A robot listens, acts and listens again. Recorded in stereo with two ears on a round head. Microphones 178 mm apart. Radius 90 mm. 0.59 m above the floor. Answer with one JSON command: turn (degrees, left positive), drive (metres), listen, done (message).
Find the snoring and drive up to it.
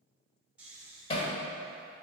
{"turn": -30}
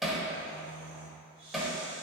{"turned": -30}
{"turn": -140}
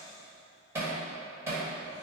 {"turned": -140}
{"listen": true}
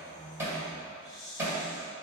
{"turn": 25}
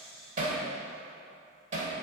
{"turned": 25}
{"drive": 1.0}
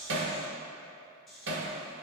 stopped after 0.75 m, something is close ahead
{"done": "Arrived at the snoring, straight ahead."}